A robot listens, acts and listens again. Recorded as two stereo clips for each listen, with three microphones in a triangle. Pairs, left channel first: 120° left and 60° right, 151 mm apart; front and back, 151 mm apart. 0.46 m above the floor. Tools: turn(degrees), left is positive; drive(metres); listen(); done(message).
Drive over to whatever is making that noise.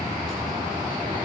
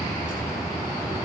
listen()
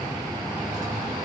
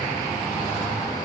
listen()
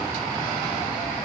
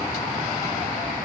done("I can't make out anything to turn to.")